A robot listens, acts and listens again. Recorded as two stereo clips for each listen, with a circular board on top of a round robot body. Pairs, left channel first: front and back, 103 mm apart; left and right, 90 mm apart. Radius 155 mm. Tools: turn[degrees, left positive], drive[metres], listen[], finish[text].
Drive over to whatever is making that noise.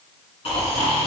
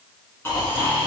Thought: The snoring: 30° left.
Action: turn[30]
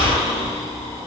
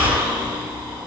Thought: The snoring is now 10° right.
Action: turn[-10]
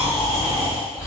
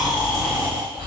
Action: drive[1.0]
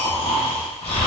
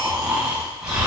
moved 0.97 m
Thought: The snoring is now 10° right.
Action: turn[-10]
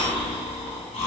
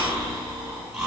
Action: drive[1.0]
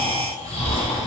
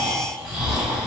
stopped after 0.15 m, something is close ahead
Thought: The snoring is now 15° right.
Action: turn[-15]
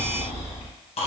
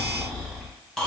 Action: finish[I am next to the snoring.]